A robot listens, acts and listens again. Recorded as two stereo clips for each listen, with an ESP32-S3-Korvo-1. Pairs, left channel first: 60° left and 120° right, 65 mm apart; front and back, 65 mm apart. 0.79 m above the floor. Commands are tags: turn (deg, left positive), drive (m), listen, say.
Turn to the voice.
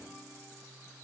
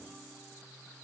<listen/>
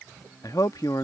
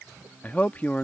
<turn deg="65"/>
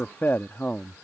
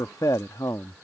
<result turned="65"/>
<say>Facing the man speaking.</say>